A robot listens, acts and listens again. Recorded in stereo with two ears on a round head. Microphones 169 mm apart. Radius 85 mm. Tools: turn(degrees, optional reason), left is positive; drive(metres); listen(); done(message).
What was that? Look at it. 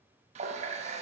turn(degrees=-35, reason="The running tap: about 35° right or 145° right.")
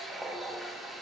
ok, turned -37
done("Found it: a running tap, straight ahead, under 1 m away.")